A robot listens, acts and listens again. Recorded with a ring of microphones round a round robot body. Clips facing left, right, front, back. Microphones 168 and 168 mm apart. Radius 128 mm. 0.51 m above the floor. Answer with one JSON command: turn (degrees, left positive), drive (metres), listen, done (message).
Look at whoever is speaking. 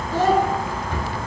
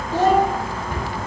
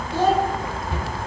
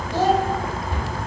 {"turn": -155}
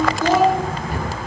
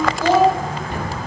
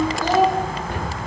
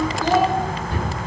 {"turn": -30}
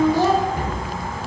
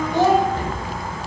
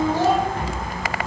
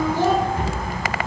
{"turn": -20}
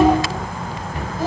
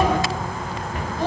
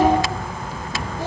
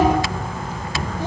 {"done": "Facing the child speaking, 1 to 2 m away."}